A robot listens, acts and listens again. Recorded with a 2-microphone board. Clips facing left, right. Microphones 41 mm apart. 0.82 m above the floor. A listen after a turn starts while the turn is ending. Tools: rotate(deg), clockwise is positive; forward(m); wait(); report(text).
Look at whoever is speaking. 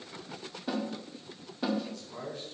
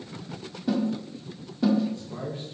rotate(25)
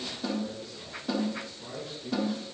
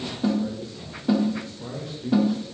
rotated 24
rotate(135)
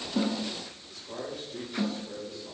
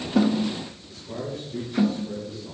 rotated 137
report("Facing the man speaking.")